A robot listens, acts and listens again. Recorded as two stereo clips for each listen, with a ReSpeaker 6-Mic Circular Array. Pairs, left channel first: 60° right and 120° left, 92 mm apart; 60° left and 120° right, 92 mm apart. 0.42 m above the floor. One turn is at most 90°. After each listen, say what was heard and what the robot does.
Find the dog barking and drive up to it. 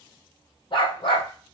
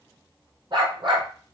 The dog barking: 90° right. Turn 90° right.
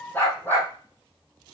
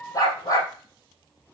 The dog barking is now 10° left. Turn 10° left.
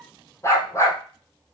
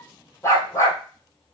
Drive 1.0 m forward.
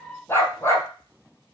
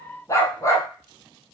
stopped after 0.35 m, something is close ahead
Something is in my way. I am facing the dog barking but have not reached it.